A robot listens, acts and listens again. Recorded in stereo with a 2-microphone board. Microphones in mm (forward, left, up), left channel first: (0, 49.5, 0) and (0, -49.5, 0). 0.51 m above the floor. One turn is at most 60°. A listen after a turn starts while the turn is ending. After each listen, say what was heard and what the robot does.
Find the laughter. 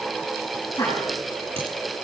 The laughter: about 40° left or 140° left. Turn 40° left.
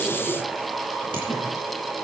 Keep listening.
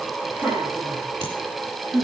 So it is at 20° right. Turn 20° right.
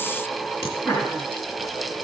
Found it: laughter, straight ahead.